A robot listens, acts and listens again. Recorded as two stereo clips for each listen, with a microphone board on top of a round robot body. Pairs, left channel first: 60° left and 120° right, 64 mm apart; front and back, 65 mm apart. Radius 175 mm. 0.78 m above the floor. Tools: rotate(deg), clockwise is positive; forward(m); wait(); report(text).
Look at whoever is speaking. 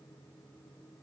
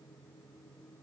wait()
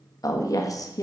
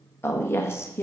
rotate(-45)
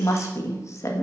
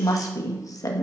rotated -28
rotate(-20)
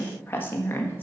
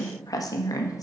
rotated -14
report("Facing the woman speaking, 1 to 2 m away.")